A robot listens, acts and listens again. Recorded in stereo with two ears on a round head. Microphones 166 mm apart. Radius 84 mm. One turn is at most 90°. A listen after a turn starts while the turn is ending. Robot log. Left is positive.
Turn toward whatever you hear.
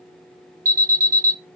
note: The alarm: about 15° right or 165° right.
cmd yaw -15
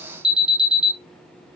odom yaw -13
end: Facing the alarm, 1 to 2 m away.